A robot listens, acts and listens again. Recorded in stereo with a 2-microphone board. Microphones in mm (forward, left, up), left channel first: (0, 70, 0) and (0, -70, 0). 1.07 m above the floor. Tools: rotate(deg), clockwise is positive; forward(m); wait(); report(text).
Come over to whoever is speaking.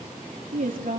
rotate(90)
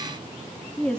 forward(1.0)
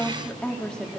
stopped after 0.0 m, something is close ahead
report("Blocked. The woman speaking is further on, straight ahead.")